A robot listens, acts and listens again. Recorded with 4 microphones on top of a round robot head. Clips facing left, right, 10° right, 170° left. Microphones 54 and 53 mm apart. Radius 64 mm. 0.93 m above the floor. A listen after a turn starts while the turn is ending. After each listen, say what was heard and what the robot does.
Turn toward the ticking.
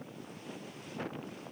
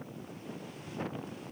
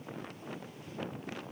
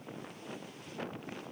Keep listening.
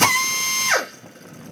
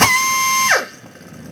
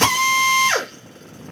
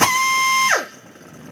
Keep listening.
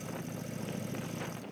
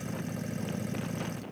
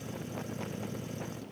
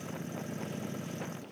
I can't make out ticking to turn to.